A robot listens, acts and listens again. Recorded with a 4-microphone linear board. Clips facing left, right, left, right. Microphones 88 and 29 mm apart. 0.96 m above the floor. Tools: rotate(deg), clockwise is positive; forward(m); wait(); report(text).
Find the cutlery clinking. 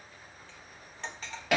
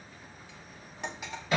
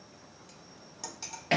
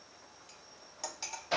rotate(30)
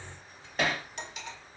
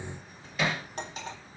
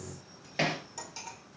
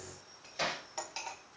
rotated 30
rotate(140)
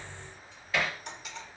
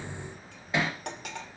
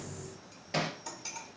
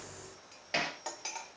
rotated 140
rotate(60)
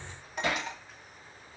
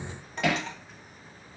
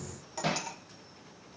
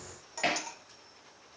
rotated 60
report("Facing the cutlery clinking, 1 to 2 m away.")